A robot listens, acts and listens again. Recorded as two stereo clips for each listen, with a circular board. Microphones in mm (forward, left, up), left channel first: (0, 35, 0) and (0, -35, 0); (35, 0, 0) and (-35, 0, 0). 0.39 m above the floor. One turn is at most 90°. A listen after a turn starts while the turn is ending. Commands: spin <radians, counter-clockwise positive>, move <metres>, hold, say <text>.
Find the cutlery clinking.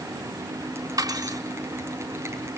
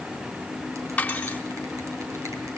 spin -1.22
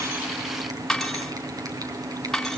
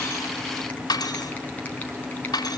say Facing the cutlery clinking.